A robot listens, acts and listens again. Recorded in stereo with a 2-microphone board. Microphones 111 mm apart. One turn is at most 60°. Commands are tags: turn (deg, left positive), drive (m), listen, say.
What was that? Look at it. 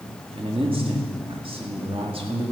<turn deg="-55"/>
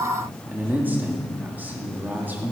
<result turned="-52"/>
<turn deg="-20"/>
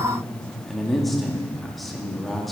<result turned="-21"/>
<say>Found it: a man speaking, straight ahead, 1 to 2 m away.</say>